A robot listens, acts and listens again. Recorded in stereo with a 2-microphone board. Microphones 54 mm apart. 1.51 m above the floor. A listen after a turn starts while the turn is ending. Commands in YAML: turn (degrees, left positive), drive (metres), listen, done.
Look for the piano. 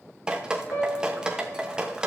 turn: 65
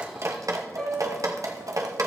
done: "Found it: a piano, straight ahead, over 4 m away."